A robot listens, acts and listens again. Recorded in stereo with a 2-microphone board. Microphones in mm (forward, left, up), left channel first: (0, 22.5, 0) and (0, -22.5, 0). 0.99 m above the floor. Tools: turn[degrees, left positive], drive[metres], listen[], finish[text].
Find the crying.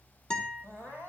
Thought: The crying: about 55° left or 125° left.
Action: turn[55]
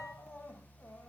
Thought: So it is at 70° left.
Action: turn[70]
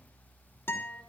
Action: listen[]
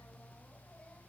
Action: listen[]
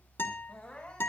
Thought: The crying is now 20° left.
Action: turn[20]
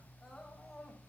Action: finish[Facing the crying.]